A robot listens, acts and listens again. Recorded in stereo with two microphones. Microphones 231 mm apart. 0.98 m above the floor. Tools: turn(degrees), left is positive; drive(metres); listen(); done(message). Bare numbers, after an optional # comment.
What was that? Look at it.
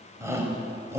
turn(-30)
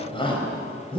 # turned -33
# So it is at 20° left.
turn(20)
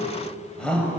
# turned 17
done("Facing the shout, over 4 m away.")